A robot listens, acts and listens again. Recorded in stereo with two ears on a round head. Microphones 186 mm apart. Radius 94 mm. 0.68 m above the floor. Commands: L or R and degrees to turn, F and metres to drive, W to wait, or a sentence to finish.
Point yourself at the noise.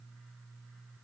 W
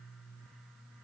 W
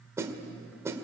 R30
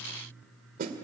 R135
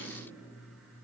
W
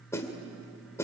L15
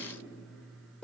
Found it: a snare drum, straight ahead.